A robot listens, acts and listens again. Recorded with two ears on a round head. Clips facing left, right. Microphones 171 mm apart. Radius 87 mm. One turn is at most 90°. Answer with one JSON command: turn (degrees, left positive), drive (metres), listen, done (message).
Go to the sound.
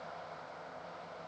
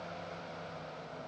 {"listen": true}
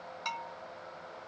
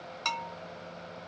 {"turn": -60}
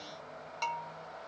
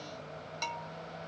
{"turn": -15}
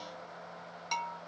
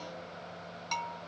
{"drive": 1.0}
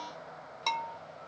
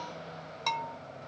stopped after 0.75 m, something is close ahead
{"done": "Arrived at the bell, straight ahead."}